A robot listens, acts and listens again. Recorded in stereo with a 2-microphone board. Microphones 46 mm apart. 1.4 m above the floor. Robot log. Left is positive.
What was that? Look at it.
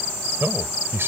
note: The man speaking: about 55° right or 125° right.
cmd yaw -55
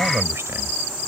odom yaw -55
cmd idle
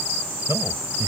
cmd idle
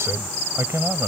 note: So it is at 75° right.
cmd yaw -75
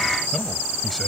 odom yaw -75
cmd idle
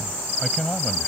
end: Found it: a man speaking, straight ahead.